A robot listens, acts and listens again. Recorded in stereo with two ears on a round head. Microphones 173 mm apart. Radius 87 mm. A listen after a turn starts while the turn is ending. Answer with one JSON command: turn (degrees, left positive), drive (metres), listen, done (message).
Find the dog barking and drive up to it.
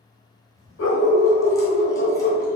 {"turn": 70}
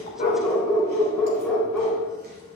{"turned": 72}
{"drive": 1.0}
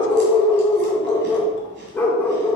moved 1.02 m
{"turn": 15}
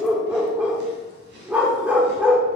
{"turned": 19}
{"turn": -10}
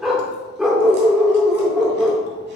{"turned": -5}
{"drive": 1.0}
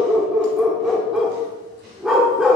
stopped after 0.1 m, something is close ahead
{"done": "I am next to the dog barking."}